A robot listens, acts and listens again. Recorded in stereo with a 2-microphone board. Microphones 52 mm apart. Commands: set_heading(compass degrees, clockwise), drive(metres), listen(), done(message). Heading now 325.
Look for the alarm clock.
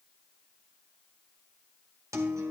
listen()
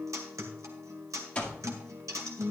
set_heading(300)
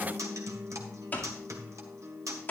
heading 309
set_heading(164)
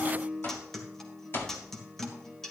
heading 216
set_heading(166)
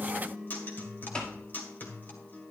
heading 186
set_heading(166)
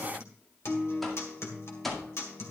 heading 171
done("Facing the alarm clock.")